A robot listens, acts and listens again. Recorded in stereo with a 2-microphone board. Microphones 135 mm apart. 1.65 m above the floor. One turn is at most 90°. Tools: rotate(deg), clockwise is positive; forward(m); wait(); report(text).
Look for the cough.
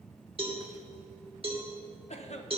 rotate(-55)
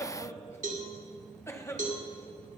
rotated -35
rotate(-20)
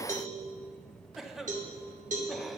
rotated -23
report("Facing the cough, 1 to 2 m away.")